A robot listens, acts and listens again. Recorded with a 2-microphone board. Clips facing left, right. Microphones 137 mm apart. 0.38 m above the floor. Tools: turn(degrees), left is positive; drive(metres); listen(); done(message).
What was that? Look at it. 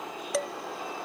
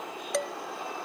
turn(degrees=30)
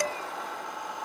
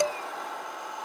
turn(degrees=-30)
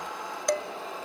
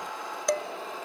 done("Facing the dishes clattering, 1 to 2 m away.")